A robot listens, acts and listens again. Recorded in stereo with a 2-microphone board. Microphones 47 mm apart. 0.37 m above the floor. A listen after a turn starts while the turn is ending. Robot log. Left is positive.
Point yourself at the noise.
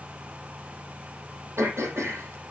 note: The throat clearing: about 75° right or 105° right.
cmd yaw -75
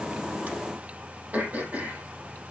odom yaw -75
note: So it is at 35° right.
cmd yaw -35
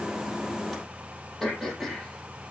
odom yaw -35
end: Found it: throat clearing, straight ahead, over 4 m away.